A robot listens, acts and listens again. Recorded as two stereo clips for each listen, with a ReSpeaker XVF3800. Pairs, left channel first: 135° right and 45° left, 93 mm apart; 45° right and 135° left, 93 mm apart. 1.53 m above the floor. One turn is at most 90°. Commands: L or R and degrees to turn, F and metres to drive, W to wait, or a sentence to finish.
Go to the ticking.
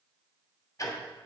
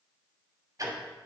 L90
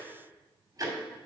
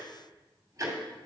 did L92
L85
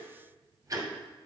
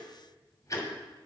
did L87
F1.0
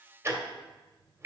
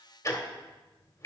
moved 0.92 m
F1.0
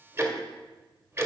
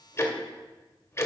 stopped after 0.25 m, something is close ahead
Arrived at the ticking, straight ahead.